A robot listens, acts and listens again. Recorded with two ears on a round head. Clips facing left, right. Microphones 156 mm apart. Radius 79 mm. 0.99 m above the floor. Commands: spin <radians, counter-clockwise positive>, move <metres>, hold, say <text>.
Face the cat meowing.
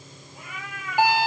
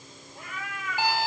spin 0.52
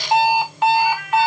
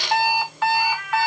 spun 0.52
spin 2.27
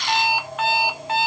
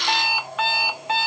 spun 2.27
say Facing the cat meowing, over 4 m away.